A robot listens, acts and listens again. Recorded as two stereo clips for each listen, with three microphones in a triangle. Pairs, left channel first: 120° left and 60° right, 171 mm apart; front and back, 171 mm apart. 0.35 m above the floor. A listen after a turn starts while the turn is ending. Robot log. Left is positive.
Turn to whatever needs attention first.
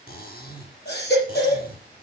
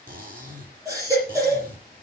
note: The baby crying: 110° left.
cmd yaw +110
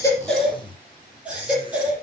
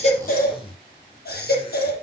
note: The baby crying is now 20° left.
cmd yaw +20
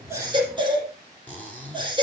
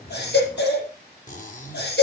end: Facing the baby crying.